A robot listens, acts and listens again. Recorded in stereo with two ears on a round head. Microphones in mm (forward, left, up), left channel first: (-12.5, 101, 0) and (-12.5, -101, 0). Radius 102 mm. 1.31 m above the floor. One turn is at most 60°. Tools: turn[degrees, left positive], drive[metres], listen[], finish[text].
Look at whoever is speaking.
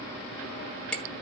Action: listen[]
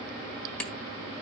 Action: listen[]
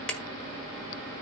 Action: finish[I can't make out anyone speaking to turn to.]